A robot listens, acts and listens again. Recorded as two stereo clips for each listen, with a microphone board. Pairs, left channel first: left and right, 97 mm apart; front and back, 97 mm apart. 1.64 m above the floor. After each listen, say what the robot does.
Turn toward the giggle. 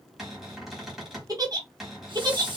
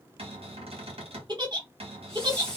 Turn 140° right.
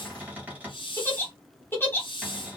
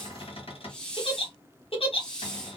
Turn 20° left.
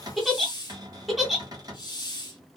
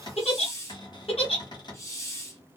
Facing the giggle.